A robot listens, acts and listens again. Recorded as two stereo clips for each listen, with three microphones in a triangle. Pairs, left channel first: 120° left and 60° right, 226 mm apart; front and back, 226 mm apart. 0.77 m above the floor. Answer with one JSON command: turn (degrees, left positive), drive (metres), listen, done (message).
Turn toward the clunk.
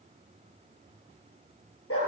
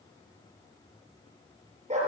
{"listen": true}
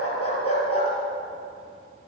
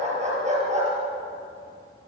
{"listen": true}
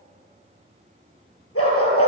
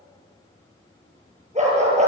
{"done": "I can't make out a clunk, only a dog barking."}